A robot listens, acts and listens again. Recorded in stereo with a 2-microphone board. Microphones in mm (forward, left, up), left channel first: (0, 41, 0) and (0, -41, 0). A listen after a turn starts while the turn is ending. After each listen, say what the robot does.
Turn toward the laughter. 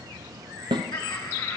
Turn 70° left.
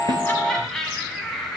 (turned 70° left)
Facing the laughter.